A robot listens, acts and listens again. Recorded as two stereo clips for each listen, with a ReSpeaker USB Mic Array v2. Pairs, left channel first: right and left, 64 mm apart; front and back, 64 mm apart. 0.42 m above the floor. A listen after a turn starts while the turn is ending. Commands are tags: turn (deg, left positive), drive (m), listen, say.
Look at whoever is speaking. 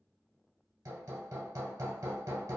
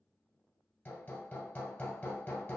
<listen/>
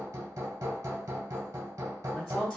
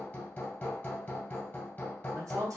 <turn deg="-150"/>
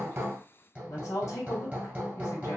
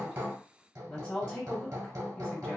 <turn deg="-60"/>
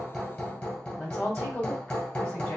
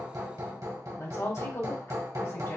<turn deg="-15"/>
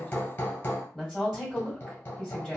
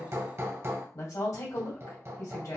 <say>Found it: a woman speaking, straight ahead, 2 to 4 m away.</say>